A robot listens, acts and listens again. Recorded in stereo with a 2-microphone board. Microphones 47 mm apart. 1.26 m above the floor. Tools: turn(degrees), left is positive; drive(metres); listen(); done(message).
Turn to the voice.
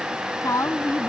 turn(degrees=90)
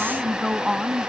done("Found it: a woman speaking, straight ahead.")